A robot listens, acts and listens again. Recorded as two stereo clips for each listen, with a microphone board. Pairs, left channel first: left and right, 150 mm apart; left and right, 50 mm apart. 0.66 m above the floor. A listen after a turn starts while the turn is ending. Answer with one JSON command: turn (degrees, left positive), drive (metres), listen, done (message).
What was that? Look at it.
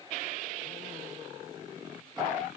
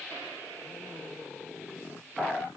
{"listen": true}
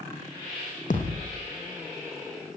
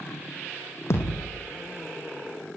{"turn": 60}
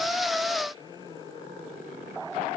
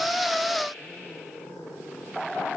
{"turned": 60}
{"listen": true}
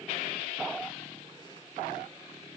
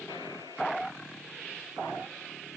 {"done": "I heard a thud, but can't make it out now. It was about straight ahead or 60° left."}